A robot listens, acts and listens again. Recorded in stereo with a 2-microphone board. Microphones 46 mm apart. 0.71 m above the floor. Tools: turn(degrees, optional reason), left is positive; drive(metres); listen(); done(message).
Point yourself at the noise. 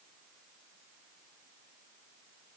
listen()
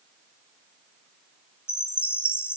turn(degrees=65, reason="The chime: about 65° left or 115° left.")
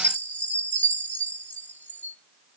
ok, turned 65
turn(degrees=45, reason="So it is at 45° left.")
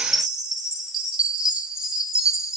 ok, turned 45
turn(degrees=-15, reason="The chime is now 15° right.")
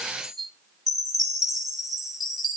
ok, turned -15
done("Facing the chime, 1 to 2 m away.")